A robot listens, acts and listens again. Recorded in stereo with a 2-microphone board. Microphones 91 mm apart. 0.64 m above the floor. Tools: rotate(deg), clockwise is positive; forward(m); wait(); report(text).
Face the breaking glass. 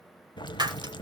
rotate(55)
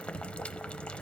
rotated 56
wait()
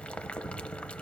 report("I heard breaking glass, but can't make it out now. It was about straight ahead or 65° right.")